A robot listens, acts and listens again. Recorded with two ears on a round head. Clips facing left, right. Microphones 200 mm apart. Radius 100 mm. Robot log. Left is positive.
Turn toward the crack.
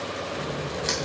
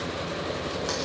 note: The crack: about 35° left or 145° left.
cmd yaw +35
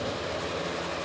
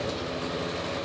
cmd idle
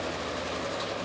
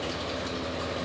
end: I heard a crack, but can't make it out now. It was about straight ahead or 110° left.